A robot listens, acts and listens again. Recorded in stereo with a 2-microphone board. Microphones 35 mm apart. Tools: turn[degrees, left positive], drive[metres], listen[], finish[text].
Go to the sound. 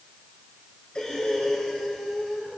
Thought: The breathing: about 30° left or 150° left.
Action: turn[30]
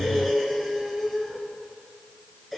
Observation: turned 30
Action: drive[1.0]
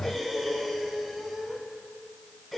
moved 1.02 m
Action: drive[1.0]
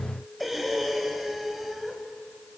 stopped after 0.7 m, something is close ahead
Action: finish[Arrived at the breathing, straight ahead.]